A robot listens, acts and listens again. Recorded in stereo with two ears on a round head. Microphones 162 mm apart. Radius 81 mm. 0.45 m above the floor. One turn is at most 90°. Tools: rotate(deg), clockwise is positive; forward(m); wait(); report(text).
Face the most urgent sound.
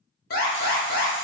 rotate(-50)
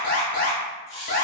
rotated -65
rotate(-55)
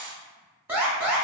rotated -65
rotate(10)
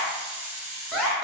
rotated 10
report("Facing the alarm.")